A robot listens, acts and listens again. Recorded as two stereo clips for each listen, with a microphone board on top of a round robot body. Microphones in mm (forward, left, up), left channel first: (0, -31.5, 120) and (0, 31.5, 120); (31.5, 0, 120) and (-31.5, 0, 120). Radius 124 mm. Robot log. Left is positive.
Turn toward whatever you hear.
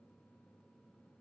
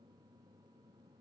cmd idle
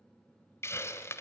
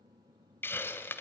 note: The hiss: 50° right.
cmd yaw -50
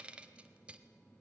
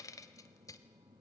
note: The hiss is now 20° left.
cmd yaw +20
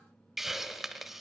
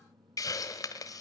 end: Found it: a hiss, straight ahead, 1 to 2 m away.